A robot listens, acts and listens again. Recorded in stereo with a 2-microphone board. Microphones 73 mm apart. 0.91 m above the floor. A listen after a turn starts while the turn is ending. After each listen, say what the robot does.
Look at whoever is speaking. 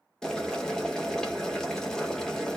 Keep listening.
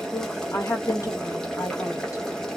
Turn 45° left.
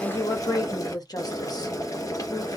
Turn 85° left.
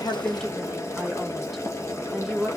Facing the woman speaking, 1 to 2 m away.